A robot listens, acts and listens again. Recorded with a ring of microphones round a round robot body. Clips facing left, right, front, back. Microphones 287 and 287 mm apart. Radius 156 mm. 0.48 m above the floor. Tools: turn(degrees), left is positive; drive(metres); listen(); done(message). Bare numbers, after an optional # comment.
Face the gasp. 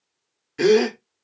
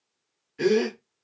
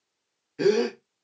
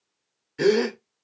# The gasp: 115° left.
turn(115)
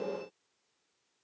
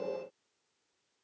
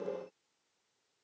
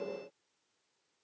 done("I heard a gasp from this way, but can't make it out now.")